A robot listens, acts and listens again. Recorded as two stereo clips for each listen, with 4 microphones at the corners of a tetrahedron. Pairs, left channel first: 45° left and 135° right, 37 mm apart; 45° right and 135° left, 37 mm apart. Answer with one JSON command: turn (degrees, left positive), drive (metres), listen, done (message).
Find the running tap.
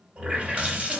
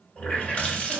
{"turn": -90}
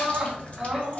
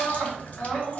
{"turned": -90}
{"done": "Facing the running tap, 1 to 2 m away."}